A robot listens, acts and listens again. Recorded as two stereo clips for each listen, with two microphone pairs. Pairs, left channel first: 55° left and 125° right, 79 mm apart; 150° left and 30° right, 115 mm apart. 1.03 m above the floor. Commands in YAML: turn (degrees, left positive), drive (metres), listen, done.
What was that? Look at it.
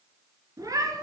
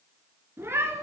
turn: -90
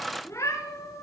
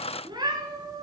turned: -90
turn: 20
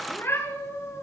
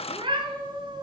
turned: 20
turn: 10
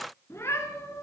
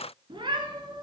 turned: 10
turn: 10
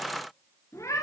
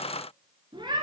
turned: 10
turn: 10
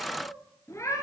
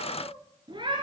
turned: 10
turn: 10
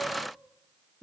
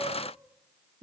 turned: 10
done: "Facing the cat meowing."